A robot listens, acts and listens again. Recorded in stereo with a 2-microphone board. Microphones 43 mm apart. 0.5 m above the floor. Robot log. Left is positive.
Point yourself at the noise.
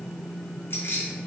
note: The keys jangling: about 70° left or 110° left.
cmd yaw +70
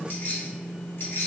note: So it is at 65° left.
cmd yaw +65
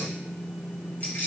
note: The keys jangling is now 45° left.
cmd yaw +45
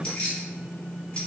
note: The keys jangling is now 20° left.
cmd yaw +20
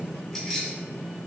note: The keys jangling is now 10° left.
cmd yaw +10
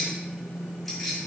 end: Facing the keys jangling, 1 to 2 m away.